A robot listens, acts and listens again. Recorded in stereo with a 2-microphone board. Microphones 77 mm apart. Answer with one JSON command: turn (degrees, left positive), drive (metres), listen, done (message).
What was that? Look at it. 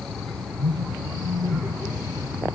{"turn": -45}
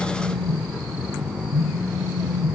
{"turn": -85}
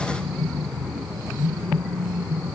{"done": "Found it: a phone buzzing, straight ahead, over 4 m away."}